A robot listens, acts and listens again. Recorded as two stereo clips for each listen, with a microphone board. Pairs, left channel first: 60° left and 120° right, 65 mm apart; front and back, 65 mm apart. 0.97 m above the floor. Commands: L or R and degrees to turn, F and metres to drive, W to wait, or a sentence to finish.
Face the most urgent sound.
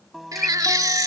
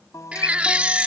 R110
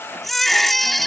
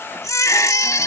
R25
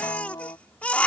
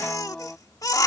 Found it: a baby crying, straight ahead.